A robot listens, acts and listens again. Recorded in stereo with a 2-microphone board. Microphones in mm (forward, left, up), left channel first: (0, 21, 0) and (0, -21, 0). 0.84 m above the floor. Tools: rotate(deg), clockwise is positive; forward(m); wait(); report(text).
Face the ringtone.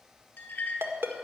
rotate(75)
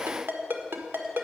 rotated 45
rotate(60)
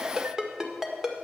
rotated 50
rotate(10)
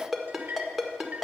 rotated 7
report("Found it: a ringtone, straight ahead, 1 to 2 m away.")